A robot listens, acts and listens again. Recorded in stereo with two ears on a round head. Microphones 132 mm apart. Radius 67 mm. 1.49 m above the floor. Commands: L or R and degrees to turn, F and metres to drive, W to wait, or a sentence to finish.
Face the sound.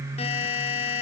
L45
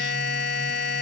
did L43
L90
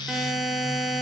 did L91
Facing the buzzer.